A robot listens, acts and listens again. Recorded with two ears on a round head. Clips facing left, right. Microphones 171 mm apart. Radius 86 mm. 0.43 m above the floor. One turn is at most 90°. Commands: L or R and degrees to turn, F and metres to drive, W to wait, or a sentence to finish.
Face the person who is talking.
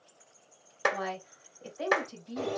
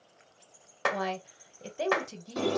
R40
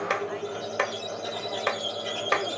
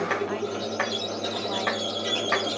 W
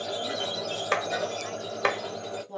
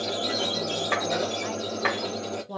R90
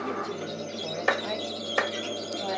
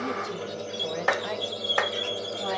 W
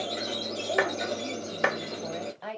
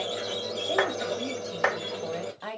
Facing the woman speaking, 1 to 2 m away.